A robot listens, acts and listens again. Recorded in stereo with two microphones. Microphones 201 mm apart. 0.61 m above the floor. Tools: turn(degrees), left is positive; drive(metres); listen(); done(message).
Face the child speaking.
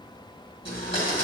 listen()
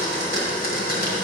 listen()
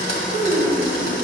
turn(degrees=-50)
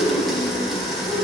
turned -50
turn(degrees=-60)
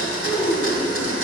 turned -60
turn(degrees=20)
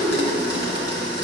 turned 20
done("Facing the child speaking, 2 to 4 m away.")